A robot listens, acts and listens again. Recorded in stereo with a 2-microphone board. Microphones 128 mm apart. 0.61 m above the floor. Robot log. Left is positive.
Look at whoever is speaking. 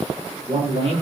note: The man speaking: about 50° right or 130° right.
cmd yaw -50
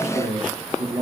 note: So it is at 75° right.
cmd yaw -75
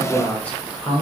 note: The man speaking is now 10° left.
cmd yaw +10
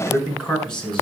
end: Found it: a man speaking, straight ahead.